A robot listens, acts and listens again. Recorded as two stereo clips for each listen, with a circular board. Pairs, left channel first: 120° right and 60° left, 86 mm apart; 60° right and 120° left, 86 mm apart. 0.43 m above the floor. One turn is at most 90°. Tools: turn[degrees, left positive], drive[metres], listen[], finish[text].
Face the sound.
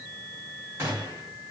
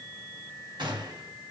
Thought: The gunshot: 115° left.
Action: turn[90]
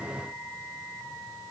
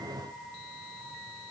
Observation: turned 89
Thought: Nothing new. It was at 25° left.
Action: turn[25]
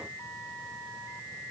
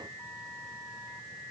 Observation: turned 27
Action: finish[I heard a gunshot from this way, but can't make it out now.]